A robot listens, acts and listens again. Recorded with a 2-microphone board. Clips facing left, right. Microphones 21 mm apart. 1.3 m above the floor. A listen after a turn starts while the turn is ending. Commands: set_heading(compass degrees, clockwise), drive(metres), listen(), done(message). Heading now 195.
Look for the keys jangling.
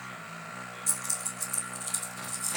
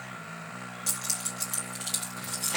set_heading(265)
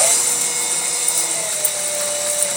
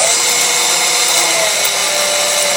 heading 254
listen()
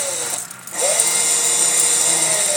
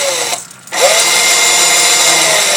listen()
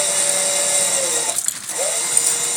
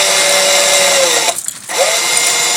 done("Found it: keys jangling, straight ahead, 2 to 4 m away.")